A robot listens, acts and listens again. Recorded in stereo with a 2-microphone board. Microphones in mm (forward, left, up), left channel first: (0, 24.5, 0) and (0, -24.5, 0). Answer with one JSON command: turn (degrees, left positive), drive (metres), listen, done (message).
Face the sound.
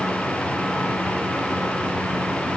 {"listen": true}
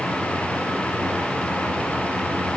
{"listen": true}
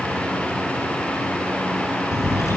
{"turn": 90}
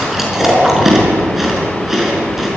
{"turn": -10}
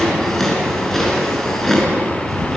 {"done": "Found it: chewing, straight ahead."}